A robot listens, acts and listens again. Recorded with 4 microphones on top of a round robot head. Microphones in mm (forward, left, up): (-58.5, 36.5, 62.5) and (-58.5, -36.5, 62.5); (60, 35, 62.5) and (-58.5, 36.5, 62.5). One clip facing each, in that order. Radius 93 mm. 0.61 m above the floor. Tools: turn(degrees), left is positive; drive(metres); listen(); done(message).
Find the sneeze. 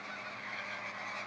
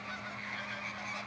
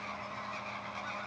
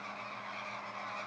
listen()
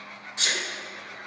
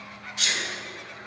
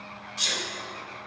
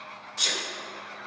turn(degrees=150)
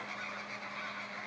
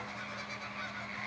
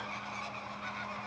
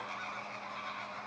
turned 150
done("I heard a sneeze from this way, but can't make it out now.")